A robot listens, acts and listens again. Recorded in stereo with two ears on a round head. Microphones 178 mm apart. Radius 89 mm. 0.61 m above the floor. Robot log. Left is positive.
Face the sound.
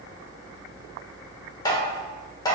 note: The tapping: about 20° left or 160° left.
cmd yaw +20
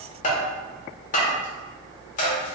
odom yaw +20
note: So it is at 140° left.
cmd yaw +140
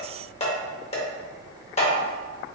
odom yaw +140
note: The tapping is now 30° left.
cmd yaw +30
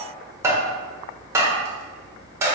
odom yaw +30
note: The tapping is now 15° right.
cmd yaw -15
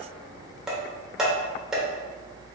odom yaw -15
end: Facing the tapping.